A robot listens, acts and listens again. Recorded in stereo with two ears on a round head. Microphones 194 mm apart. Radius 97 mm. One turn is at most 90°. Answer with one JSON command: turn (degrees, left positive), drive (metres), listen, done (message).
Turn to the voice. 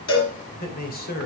{"turn": 45}
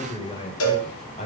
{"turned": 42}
{"turn": 30}
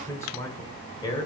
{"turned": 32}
{"turn": 20}
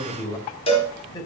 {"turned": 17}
{"turn": 20}
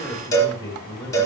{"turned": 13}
{"turn": 15}
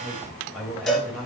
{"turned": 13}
{"done": "Facing the man speaking, 2 to 4 m away."}